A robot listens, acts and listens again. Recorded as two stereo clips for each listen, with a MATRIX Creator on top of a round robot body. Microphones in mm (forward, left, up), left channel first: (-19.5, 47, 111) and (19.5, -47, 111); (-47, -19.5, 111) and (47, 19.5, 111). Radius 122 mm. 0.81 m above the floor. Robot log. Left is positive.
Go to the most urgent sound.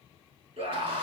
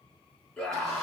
note: The scream: 70° right.
cmd yaw -70
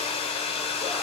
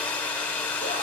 cmd idle
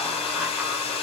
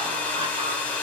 cmd idle
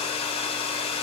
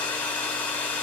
end: I heard a scream from this way, but can't make it out now. I did not reach it.